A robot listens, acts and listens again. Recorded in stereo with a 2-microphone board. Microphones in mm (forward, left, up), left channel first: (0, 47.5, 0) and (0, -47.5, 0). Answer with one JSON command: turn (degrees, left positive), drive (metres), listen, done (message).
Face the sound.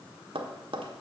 {"turn": -70}
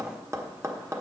{"turn": -30}
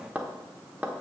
{"turn": -15}
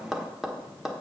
{"done": "Found it: tapping, straight ahead."}